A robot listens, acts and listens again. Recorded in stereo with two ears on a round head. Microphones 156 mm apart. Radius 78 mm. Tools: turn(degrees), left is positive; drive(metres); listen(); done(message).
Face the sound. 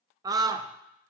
turn(degrees=-20)
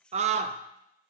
turn(degrees=-140)
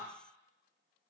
listen()
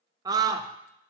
turn(degrees=-20)
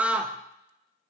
turn(degrees=-10)
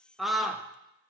done("Found it: a scream, straight ahead.")